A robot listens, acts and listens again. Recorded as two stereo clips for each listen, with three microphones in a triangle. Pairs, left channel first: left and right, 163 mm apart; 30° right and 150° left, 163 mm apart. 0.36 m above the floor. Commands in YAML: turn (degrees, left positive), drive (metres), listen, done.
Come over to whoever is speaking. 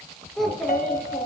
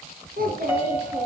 turn: 180
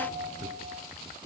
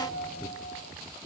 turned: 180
listen: true
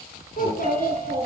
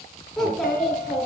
turn: 55
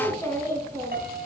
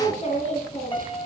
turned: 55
turn: 15
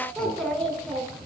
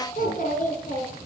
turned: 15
drive: 1.0
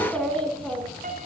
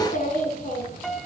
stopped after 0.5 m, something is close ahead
done: "Something is in my way. I am facing the child speaking but have not reached it."